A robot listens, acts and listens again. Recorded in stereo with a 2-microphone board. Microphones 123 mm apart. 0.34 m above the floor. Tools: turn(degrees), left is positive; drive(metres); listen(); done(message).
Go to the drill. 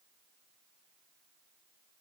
listen()
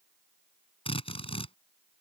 turn(degrees=50)
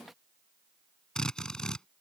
drive(metres=1.0)
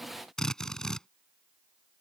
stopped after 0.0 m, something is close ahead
done("Something is in my way. I am facing the drill but have not reached it.")